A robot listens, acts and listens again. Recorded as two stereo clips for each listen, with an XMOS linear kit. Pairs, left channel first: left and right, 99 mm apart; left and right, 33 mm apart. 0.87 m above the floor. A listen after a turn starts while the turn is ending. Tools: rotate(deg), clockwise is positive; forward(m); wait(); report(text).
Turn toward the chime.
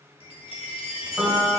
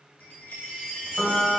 rotate(-70)
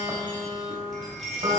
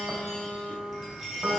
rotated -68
report("Found it: a chime, straight ahead, under 1 m away.")